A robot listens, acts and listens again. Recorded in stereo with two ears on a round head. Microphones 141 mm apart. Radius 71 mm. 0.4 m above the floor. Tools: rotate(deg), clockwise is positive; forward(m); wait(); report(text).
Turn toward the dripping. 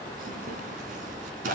wait()
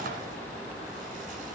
wait()
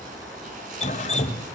rotate(-40)
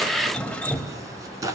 report("Found it: dripping, straight ahead.")